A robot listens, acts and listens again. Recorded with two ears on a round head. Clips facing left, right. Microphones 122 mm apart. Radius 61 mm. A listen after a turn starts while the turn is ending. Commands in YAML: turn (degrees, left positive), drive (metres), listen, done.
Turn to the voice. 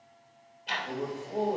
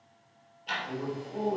turn: 45
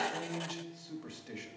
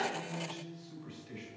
turn: 75
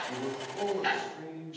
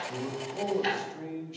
turn: -20
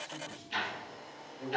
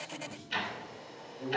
done: "Found it: a man speaking, straight ahead."